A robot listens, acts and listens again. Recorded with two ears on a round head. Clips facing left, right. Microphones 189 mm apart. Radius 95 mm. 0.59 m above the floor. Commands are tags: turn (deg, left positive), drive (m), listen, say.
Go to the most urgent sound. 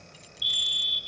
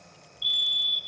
<turn deg="65"/>
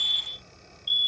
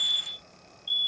<turn deg="35"/>
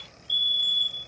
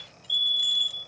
<drive m="1.0"/>
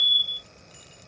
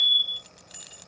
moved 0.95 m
<drive m="1.0"/>
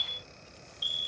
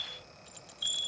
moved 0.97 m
<turn deg="10"/>
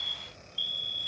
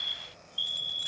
<drive m="1.0"/>
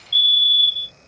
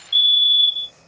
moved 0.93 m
<drive m="1.0"/>
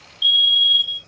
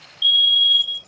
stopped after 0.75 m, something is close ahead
<say>I am next to the fire alarm.</say>